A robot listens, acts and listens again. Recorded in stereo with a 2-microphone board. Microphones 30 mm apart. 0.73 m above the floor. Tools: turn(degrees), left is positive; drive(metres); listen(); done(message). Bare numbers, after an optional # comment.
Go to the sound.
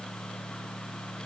listen()
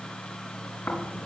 turn(90)
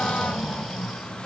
drive(1.0)
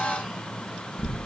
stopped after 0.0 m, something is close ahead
done("Something is in my way. I am facing the snoring but have not reached it.")